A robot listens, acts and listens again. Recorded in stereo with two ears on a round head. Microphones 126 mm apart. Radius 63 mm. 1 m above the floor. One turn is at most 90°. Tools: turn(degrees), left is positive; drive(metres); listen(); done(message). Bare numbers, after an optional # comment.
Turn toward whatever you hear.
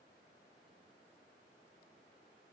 listen()
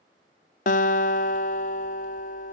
# The guitar: about 60° left or 120° left.
turn(60)
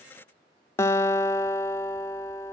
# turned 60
# So it is at 25° left.
turn(25)
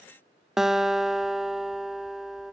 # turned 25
done("Facing the guitar.")